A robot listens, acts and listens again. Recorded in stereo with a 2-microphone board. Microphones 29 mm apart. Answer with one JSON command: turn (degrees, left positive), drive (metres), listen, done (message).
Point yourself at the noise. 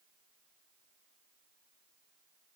{"listen": true}
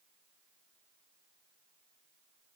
{"listen": true}
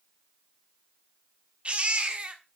{"turn": -45}
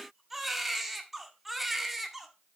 {"done": "Facing the baby crying, 1 to 2 m away."}